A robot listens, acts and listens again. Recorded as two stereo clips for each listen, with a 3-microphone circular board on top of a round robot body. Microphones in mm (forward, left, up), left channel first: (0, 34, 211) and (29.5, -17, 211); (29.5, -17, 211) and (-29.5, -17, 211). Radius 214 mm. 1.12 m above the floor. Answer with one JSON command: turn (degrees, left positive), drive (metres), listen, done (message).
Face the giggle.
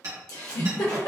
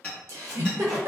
{"turn": 135}
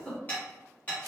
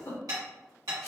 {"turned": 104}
{"turn": 30}
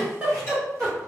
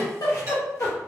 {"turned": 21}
{"turn": 10}
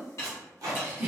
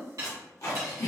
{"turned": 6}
{"done": "Found it: a giggle, straight ahead."}